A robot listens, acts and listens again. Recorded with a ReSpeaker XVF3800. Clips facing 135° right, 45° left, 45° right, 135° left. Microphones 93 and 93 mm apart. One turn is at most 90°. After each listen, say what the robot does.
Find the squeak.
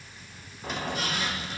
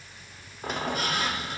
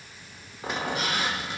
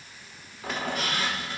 Turn 20° left.
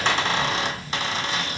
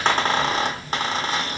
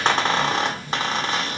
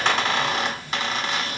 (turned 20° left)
Found it: a squeak, straight ahead, 1 to 2 m away.